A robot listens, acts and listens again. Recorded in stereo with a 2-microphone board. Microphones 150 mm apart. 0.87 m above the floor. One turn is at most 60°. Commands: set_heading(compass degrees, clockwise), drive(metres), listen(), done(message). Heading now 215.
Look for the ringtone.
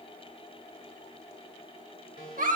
set_heading(155)
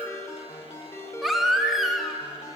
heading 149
set_heading(129)
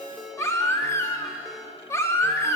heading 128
done("Facing the ringtone, 2 to 4 m away.")